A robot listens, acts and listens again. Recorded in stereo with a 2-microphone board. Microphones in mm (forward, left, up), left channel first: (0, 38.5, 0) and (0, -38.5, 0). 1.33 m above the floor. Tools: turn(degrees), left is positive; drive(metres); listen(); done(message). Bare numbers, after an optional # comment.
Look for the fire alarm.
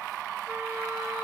listen()
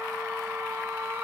listen()
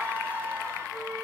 done("I can't make out a fire alarm to turn to.")